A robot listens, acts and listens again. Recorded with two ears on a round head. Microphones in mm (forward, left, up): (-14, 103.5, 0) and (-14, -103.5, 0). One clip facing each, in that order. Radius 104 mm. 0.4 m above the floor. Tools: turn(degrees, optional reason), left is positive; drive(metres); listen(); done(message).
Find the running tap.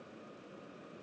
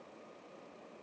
listen()
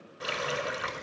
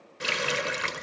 turn(degrees=-35, reason="The running tap: about 35° right or 145° right.")
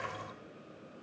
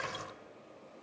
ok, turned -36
listen()
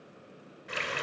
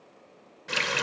turn(degrees=-105, reason="So it is at 105° right.")
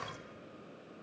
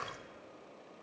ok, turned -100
listen()
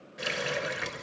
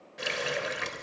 done("Found it: a running tap, straight ahead.")